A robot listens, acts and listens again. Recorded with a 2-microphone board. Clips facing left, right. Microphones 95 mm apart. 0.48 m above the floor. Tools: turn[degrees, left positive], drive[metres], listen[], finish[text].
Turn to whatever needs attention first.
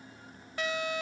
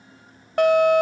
Thought: The fire alarm: about 60° right or 120° right.
Action: turn[-60]
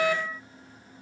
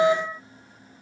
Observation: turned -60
Thought: So it is at 30° right.
Action: turn[-30]
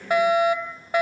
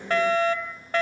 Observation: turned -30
Thought: The fire alarm is now 15° left.
Action: turn[15]
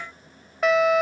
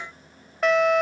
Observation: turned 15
Action: finish[Facing the fire alarm.]